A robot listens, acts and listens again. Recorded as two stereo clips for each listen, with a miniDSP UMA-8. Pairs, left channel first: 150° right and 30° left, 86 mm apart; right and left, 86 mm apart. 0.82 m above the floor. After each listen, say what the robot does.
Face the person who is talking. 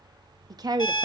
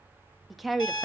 Found it: a woman speaking, straight ahead.